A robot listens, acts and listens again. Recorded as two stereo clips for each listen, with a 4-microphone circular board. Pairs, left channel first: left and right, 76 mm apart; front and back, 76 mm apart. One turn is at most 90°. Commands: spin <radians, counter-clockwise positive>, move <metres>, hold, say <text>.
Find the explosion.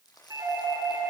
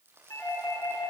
hold
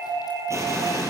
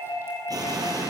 spin -1.57
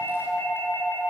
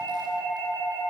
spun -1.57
spin -0.87
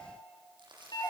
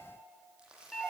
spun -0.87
say Facing where the explosion came from. I can't hear it now.